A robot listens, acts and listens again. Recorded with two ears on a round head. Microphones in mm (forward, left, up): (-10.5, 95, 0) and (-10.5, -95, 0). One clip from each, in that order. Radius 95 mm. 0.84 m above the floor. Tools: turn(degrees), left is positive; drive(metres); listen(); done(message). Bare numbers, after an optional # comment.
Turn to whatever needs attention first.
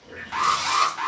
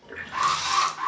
# The alarm: about 35° left or 145° left.
turn(35)
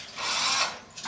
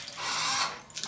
listen()
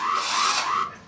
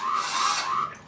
# So it is at 105° left.
turn(105)
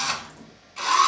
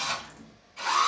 done("Facing the alarm, 1 to 2 m away.")